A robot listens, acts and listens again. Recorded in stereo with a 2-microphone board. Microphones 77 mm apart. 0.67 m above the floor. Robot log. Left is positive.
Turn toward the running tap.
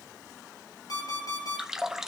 cmd yaw -30
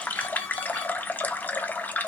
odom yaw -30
note: So it is at 25° left.
cmd yaw +25
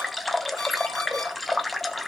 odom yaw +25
end: Facing the running tap.